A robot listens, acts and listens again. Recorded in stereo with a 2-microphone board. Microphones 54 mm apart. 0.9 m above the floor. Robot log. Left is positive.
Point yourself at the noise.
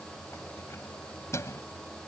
note: The keys jangling: about 65° left or 115° left.
cmd yaw +65
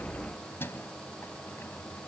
note: So it is at 50° left.
cmd yaw +50
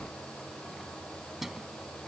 end: Facing the keys jangling.